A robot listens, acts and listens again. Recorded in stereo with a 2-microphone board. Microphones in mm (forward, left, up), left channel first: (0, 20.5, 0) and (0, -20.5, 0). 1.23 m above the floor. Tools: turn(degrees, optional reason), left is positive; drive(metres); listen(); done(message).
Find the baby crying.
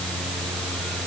listen()
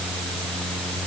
listen()
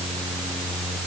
done("I can't make out a baby crying.")